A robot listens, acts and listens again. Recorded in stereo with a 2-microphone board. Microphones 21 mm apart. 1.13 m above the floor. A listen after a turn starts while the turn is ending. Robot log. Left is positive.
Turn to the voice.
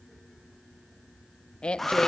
note: The woman speaking: about 50° left or 130° left.
cmd yaw +50
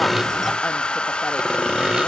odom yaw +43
cmd idle
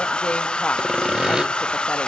cmd idle
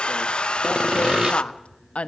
note: So it is at 85° left.
cmd yaw +85
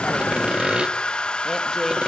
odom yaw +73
note: Nothing new. It was at 10° left.
cmd yaw +10
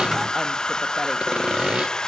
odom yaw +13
cmd idle
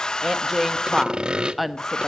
end: Facing the woman speaking, 1 to 2 m away.